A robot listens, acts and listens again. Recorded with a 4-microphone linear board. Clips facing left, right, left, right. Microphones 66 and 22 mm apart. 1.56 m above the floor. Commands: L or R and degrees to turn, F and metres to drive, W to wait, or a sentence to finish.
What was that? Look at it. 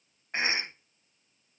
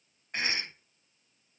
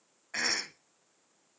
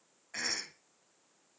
L25
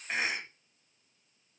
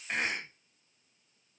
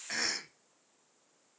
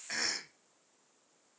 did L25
Facing the cough.